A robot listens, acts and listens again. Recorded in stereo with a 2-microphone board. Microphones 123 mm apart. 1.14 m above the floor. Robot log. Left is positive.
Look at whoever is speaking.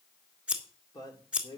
note: The man speaking: about 35° left or 145° left.
cmd yaw +35
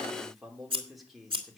end: Found it: a man speaking, straight ahead.